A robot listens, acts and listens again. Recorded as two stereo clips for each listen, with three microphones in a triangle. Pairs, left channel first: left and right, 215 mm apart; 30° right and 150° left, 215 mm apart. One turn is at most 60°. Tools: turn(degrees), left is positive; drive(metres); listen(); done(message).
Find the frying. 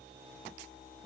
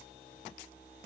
listen()
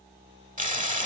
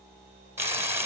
turn(degrees=-60)
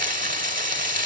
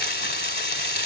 turn(degrees=-45)
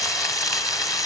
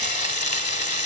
turn(degrees=20)
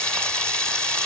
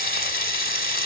done("Found it: frying, straight ahead, 1 to 2 m away.")